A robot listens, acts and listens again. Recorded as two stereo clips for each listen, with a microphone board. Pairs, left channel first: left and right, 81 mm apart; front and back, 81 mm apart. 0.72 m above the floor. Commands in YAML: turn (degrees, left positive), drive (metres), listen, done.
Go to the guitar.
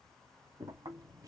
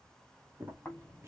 listen: true
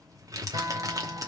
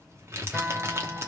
turn: -95
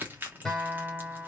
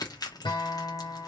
drive: 1.0
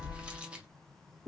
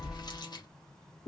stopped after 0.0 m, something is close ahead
listen: true
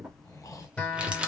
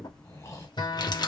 turn: 15
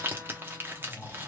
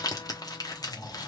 listen: true
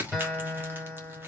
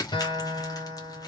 done: "Blocked. The guitar is further on, straight ahead."